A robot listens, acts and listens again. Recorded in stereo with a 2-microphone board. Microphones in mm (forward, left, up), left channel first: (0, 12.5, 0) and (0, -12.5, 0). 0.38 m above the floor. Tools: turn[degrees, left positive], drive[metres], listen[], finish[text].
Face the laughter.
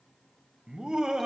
Thought: The laughter: about 25° right or 155° right.
Action: turn[-25]
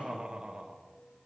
Thought: The laughter: about 40° right or 140° right.
Action: turn[-40]
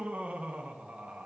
Thought: So it is at 110° right.
Action: turn[-110]
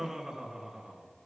Thought: The laughter is now 15° right.
Action: turn[-15]
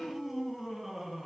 Action: finish[Found it: laughter, straight ahead, over 4 m away.]